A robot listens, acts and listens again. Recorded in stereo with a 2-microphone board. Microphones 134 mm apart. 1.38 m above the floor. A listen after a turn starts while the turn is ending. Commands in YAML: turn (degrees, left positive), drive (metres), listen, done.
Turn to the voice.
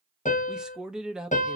turn: -30
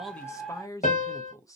turn: 25
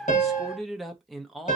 done: "Found it: a man speaking, straight ahead."